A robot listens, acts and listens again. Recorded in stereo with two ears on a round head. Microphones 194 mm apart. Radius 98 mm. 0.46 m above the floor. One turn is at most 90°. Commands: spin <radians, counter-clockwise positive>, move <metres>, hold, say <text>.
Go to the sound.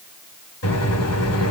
spin 1.22
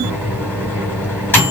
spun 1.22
spin 0.17
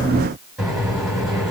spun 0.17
move 1.0
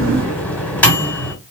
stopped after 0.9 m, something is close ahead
spin 0.17
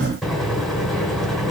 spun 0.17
say I am next to the microwave.